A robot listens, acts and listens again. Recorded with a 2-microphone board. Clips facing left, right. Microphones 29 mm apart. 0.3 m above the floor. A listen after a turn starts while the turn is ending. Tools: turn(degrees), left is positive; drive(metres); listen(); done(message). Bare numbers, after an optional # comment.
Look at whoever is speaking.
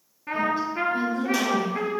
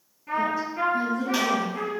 # The woman speaking: about 65° left or 115° left.
turn(65)
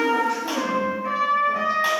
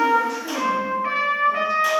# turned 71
listen()
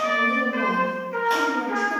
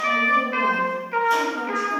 listen()
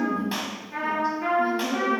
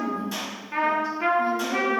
# So it is at 30° left.
turn(30)
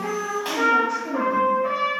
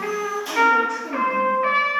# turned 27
done("Found it: a woman speaking, straight ahead.")